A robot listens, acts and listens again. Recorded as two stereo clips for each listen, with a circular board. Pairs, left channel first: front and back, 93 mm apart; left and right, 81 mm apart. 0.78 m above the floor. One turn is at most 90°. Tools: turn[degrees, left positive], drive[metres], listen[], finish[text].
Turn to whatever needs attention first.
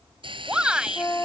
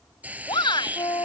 Thought: The shout: 100° left.
Action: turn[90]
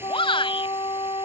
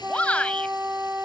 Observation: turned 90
Thought: The shout is now 15° left.
Action: turn[15]
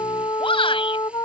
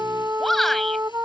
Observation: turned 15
Action: finish[Found it: a shout, straight ahead.]